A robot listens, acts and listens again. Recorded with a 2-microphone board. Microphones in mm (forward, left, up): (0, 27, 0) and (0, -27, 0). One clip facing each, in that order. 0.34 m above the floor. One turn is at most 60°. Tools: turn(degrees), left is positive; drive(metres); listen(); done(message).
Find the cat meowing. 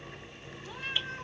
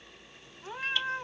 turn(degrees=-35)
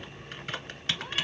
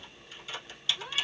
done("Facing the cat meowing.")